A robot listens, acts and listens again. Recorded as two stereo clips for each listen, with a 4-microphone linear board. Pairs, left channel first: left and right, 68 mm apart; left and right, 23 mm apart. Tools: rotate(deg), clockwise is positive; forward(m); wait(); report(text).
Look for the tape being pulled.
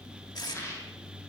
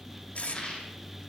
rotate(-90)
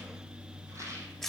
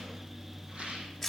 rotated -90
report("Facing the tape being pulled, 1 to 2 m away.")